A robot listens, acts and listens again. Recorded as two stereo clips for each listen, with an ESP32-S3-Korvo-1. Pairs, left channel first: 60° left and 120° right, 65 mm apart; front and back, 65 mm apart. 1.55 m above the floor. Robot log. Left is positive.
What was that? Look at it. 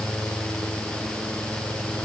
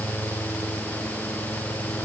cmd idle
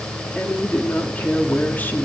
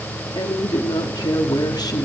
end: Found it: a woman speaking, straight ahead.